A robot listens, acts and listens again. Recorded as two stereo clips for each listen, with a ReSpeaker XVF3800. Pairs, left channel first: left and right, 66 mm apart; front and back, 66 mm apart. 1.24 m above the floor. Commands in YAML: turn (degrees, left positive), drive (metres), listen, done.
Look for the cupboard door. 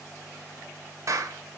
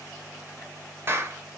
listen: true
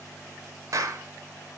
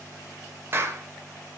listen: true
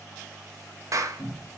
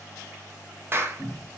turn: 85
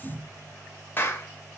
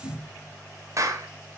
turn: -10
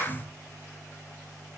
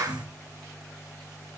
done: "Facing the cupboard door."